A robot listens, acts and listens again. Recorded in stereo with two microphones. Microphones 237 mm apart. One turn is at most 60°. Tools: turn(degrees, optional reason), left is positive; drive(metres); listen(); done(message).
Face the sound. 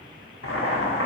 turn(degrees=60)
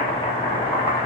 turn(degrees=25, reason="So it is at 25° left.")
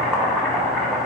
done("Found it: boiling, straight ahead.")